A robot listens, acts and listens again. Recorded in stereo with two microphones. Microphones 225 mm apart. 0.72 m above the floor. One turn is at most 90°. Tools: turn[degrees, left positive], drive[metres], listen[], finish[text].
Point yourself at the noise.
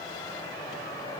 Action: listen[]
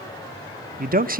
Thought: The man speaking: about 40° right or 140° right.
Action: turn[-40]
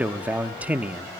Thought: So it is at 10° right.
Action: turn[-10]
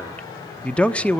Action: finish[Facing the man speaking.]